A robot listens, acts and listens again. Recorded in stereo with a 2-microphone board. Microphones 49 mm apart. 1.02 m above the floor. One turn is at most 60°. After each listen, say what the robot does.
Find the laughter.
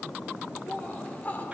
Turn 35° left.
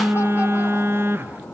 Keep listening.
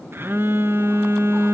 Keep listening.
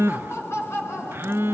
Turn 60° left.
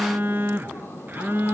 Turn 55° left.
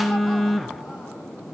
Keep listening.
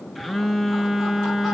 Facing where the laughter came from. I can't hear it now.